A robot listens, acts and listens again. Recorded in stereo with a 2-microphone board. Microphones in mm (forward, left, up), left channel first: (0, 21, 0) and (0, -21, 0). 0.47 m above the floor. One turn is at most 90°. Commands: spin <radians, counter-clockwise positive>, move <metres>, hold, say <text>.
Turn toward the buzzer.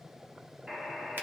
spin -0.52
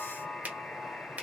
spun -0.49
spin 0.26
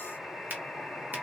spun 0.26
say Found it: a buzzer, straight ahead, under 1 m away.